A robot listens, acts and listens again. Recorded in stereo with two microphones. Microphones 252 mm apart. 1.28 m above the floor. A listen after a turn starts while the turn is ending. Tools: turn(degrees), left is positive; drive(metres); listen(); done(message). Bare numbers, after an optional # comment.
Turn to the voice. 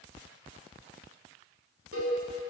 listen()
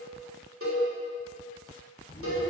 # The child speaking: about 35° left or 145° left.
turn(35)
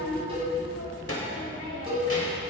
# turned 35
# So it is at 115° left.
turn(115)
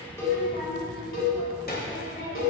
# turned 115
# The child speaking is now 40° left.
turn(40)
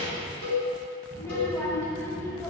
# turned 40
# The child speaking is now 10° left.
turn(10)
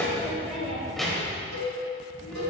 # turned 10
done("Facing the child speaking, 2 to 4 m away.")